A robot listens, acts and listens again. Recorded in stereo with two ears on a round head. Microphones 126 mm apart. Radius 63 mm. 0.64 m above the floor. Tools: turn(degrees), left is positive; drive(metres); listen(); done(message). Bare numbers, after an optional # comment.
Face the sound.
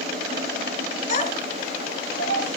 # The child speaking: about 50° left or 130° left.
turn(50)
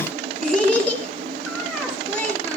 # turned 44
# So it is at 10° left.
turn(10)
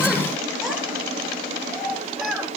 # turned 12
done("Facing the child speaking.")